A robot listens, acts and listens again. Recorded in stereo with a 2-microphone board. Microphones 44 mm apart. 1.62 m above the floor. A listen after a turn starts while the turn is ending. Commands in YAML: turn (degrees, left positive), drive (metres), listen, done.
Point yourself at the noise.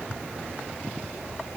listen: true
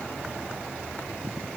listen: true
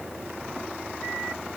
done: "I can't make out anything to turn to."